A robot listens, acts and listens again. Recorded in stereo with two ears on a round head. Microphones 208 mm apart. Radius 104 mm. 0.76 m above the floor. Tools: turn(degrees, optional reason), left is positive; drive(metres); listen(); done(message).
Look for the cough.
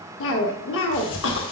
turn(degrees=55, reason="The cough: about 55° left or 125° left.")
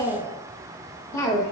turn(degrees=15, reason="So it is at 15° left.")
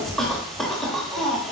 done("Found it: a cough, straight ahead.")